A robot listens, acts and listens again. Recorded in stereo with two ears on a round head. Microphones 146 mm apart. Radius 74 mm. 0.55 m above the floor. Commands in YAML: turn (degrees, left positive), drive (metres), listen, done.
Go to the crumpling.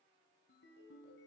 listen: true
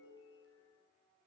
listen: true
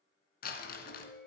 turn: 60
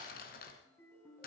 turn: 55
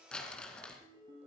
drive: 1.0
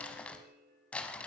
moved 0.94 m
turn: 10
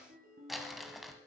drive: 1.0
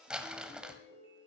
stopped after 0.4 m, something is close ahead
done: "Arrived at the crumpling, straight ahead."